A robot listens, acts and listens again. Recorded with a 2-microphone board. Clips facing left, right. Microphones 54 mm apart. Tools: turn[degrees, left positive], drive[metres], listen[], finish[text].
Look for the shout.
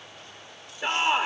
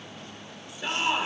Thought: The shout: about 35° left or 145° left.
Action: turn[35]
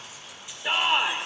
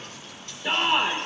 Action: finish[Facing the shout, 1 to 2 m away.]